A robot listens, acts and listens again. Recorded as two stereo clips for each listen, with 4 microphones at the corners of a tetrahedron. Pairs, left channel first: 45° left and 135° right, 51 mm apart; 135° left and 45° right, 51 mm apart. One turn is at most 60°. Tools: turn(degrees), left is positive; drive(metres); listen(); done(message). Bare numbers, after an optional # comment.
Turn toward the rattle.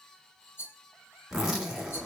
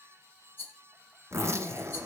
# The rattle: 85° left.
turn(60)
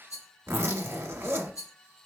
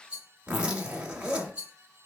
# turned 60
# The rattle is now 25° left.
turn(25)
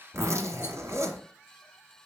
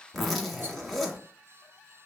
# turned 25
listen()
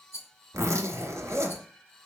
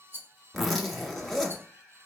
done("Facing the rattle.")